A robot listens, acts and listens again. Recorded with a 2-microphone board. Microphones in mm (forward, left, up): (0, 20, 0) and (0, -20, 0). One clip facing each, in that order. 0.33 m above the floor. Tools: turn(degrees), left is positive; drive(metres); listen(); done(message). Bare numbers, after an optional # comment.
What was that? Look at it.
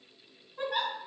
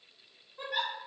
# The giggle: about 60° left or 120° left.
turn(60)
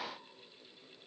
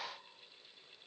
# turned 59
listen()
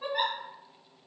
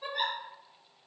# So it is at 45° left.
turn(45)
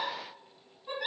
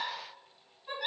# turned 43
done("Facing the giggle.")